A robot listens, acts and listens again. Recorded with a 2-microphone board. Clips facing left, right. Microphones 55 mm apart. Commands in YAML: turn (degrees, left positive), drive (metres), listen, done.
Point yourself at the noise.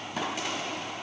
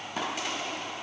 listen: true
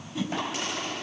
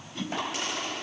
turn: 30
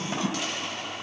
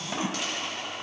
turn: -25
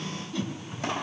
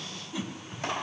turn: -10
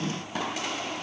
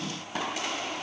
listen: true
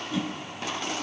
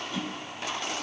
done: "Found it: a whoosh, straight ahead, 2 to 4 m away."